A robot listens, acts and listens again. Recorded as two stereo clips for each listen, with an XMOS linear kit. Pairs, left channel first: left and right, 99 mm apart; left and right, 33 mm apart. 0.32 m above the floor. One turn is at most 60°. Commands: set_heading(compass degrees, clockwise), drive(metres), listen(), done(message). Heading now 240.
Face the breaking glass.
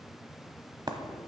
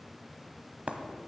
set_heading(285)
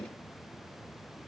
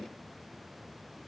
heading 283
listen()
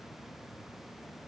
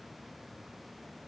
done("I heard breaking glass, but can't make it out now. It was about straight ahead or 95° right.")